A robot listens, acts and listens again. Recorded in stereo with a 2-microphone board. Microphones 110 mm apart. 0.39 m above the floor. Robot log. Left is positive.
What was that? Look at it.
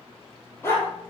note: The dog barking: about 20° left or 160° left.
cmd yaw +20
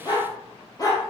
note: The dog barking: about 30° left or 150° left.
cmd yaw +30
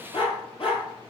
note: So it is at 125° left.
cmd yaw +125
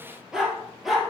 end: Facing the dog barking, 2 to 4 m away.